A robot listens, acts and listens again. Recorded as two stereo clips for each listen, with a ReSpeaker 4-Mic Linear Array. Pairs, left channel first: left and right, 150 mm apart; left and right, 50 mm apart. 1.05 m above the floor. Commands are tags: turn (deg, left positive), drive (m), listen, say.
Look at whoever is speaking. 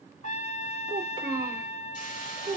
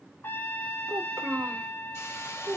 <turn deg="-55"/>
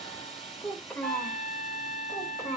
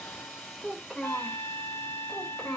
<turn deg="20"/>
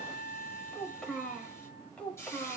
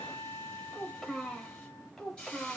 <turn deg="10"/>
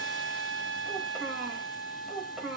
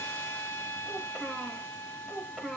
<say>Found it: a child speaking, straight ahead, 2 to 4 m away.</say>